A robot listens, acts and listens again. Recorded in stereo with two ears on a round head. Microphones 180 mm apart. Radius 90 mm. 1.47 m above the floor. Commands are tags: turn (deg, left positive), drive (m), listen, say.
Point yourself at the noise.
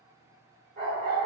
<turn deg="-50"/>
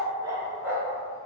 <turn deg="-10"/>
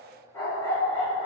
<turn deg="25"/>
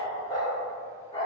<turn deg="30"/>
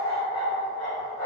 <turn deg="35"/>
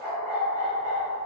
<say>Facing the dog barking, 1 to 2 m away.</say>